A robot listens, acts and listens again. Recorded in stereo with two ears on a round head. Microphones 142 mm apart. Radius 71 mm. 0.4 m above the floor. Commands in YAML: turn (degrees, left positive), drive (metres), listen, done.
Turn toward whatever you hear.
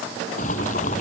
turn: 45
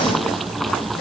done: "Facing the boiling."